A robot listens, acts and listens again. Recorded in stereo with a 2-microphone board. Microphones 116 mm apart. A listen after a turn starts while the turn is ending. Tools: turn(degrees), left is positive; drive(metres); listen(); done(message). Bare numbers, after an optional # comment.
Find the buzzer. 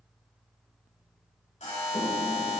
turn(90)
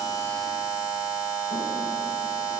# So it is at 10° right.
turn(-10)
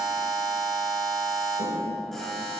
done("Found it: a buzzer, straight ahead, over 4 m away.")